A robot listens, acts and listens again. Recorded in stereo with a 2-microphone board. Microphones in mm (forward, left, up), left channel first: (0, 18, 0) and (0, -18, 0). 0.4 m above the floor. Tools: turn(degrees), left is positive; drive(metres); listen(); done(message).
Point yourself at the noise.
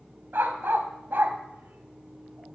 turn(degrees=-90)
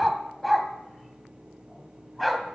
done("Facing the dog barking, 1 to 2 m away.")